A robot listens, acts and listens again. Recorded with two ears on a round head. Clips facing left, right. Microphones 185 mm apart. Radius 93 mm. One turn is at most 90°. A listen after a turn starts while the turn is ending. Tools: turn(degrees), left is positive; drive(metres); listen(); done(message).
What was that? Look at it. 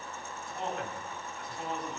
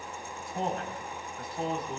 turn(degrees=-35)
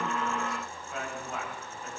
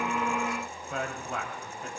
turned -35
turn(degrees=-90)
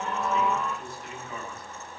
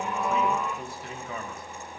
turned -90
turn(degrees=-60)
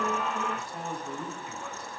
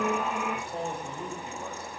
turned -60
turn(degrees=-25)
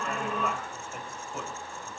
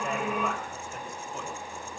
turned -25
done("Found it: a man speaking, straight ahead, over 4 m away.")